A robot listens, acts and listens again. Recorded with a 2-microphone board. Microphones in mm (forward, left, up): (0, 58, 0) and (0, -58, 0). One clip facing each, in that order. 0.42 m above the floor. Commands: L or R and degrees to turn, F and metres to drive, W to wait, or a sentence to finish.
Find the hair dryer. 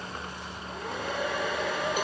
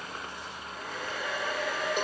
L65
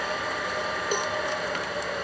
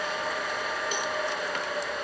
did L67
Found it: a hair dryer, straight ahead, over 4 m away.